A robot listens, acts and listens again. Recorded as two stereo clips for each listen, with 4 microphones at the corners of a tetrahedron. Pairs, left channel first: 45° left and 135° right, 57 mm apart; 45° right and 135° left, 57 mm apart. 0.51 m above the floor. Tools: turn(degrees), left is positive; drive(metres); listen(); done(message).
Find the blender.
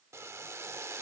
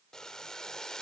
listen()
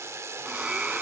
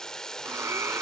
turn(degrees=155)
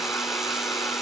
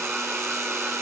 listen()
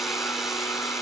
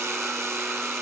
listen()
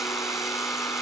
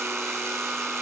turn(degrees=55)
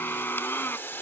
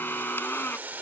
done("Facing the blender, under 1 m away.")